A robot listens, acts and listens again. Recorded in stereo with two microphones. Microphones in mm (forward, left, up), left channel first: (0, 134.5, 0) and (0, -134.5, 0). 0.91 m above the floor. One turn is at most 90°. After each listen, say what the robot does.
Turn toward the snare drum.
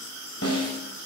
Turn 60° left.
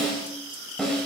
Found it: a snare drum, straight ahead, over 4 m away.